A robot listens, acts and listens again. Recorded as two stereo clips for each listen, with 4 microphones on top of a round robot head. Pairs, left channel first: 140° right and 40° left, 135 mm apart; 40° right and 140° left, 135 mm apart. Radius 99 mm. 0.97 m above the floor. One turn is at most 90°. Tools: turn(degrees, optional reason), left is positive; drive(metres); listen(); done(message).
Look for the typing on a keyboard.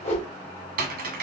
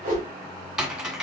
turn(degrees=50, reason="The typing on a keyboard: 50° left.")
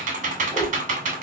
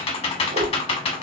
done("Found it: typing on a keyboard, straight ahead.")